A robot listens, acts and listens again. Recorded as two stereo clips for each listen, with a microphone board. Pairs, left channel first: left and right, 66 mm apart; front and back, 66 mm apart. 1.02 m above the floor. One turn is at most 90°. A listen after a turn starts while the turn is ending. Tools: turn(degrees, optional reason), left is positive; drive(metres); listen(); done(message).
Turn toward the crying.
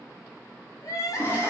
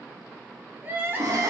turn(degrees=90, reason="The crying: 120° left.")
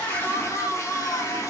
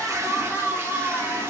turn(degrees=40, reason="The crying is now 40° left.")
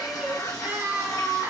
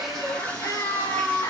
turn(degrees=-25, reason="The crying is now 25° right.")
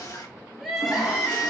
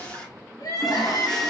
done("Found it: crying, straight ahead, 1 to 2 m away.")